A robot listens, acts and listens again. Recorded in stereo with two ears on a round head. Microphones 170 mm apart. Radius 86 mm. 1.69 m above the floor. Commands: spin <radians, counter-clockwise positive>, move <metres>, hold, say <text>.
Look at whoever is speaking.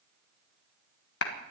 hold
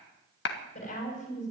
spin 0.70
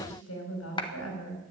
spin 1.75
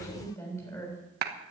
spin 0.26
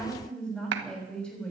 say Facing the woman speaking.